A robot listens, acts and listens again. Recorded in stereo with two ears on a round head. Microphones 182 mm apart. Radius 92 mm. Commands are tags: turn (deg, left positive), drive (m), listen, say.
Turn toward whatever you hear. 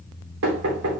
<turn deg="-90"/>
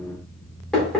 <say>Found it: knocking, straight ahead, 2 to 4 m away.</say>